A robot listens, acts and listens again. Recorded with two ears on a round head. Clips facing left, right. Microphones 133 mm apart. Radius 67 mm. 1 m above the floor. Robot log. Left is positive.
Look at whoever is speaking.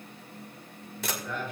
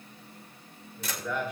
cmd yaw -90
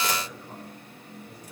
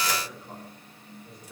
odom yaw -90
end: Facing the man speaking.